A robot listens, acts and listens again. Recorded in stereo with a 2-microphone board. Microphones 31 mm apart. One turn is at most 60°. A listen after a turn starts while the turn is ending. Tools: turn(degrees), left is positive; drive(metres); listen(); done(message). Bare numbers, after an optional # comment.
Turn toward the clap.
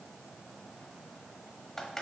listen()
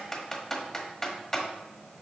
listen()
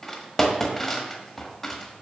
done("I can't make out a clap, only typing on a keyboard.")